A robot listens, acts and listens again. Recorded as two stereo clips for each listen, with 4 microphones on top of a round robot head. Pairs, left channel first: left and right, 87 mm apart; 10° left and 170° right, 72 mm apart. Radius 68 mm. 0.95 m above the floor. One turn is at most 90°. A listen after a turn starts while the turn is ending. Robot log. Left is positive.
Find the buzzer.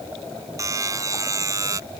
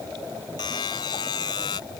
note: The buzzer: 35° right.
cmd yaw -35
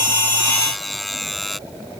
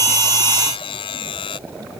end: Found it: a buzzer, straight ahead.